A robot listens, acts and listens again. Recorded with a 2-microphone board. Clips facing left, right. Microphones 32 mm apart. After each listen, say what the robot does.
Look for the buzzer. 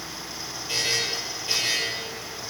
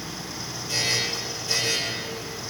Turn 30° left.
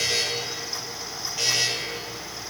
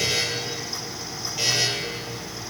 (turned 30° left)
Facing the buzzer, over 4 m away.